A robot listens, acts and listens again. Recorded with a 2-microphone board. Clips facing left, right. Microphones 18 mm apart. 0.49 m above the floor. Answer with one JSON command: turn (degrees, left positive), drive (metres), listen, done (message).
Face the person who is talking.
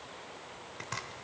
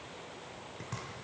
{"listen": true}
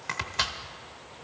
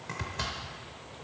{"listen": true}
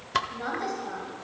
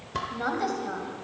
{"turn": -20}
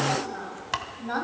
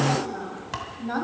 {"turn": 10}
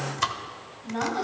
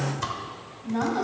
{"done": "Facing the woman speaking."}